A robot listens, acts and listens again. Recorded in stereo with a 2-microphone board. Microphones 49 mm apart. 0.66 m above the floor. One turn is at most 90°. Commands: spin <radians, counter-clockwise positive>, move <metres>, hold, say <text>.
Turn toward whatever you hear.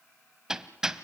spin -0.52
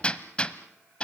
spin 0.35
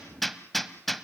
say Found it: hammering, straight ahead.